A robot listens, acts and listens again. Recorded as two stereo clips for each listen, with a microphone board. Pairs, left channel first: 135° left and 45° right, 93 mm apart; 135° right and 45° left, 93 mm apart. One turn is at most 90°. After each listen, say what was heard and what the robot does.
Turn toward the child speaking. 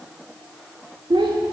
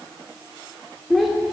The child speaking: 45° right. Turn 45° right.
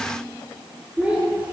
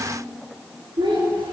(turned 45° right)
The child speaking is now 35° left. Turn 35° left.
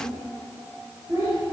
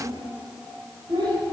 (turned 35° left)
The child speaking is now 15° left. Turn 15° left.
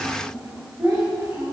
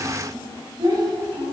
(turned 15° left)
The child speaking is now 10° left. Turn 10° left.
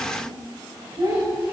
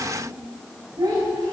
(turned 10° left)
Facing the child speaking, over 4 m away.